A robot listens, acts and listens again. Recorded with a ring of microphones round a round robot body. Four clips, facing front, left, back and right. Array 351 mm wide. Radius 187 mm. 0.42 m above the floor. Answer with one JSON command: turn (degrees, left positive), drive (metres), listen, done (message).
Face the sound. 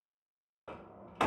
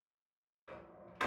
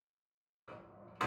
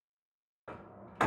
{"turn": -45}
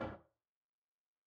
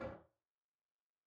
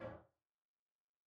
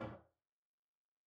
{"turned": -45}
{"done": "Facing the door slam."}